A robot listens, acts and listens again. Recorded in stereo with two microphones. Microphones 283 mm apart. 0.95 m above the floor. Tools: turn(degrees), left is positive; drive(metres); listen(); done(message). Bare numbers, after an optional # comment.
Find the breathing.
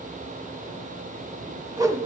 listen()
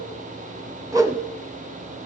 listen()
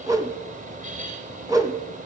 done("I can't make out breathing, only a whoosh.")